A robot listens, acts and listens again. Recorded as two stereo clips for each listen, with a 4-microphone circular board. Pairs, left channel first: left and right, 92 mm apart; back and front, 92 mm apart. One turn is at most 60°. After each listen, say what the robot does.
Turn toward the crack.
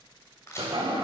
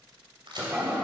Turn 30° left.
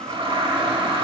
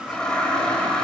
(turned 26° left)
I heard a crack from this way, but can't make it out now.